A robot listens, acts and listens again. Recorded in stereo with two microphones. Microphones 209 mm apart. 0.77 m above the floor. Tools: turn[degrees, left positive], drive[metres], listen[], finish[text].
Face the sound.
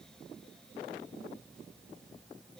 Action: listen[]
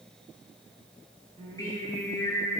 Action: turn[30]
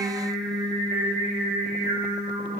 Thought: So it is at 40° right.
Action: turn[-40]
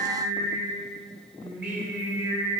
Action: finish[Found it: singing, straight ahead, 2 to 4 m away.]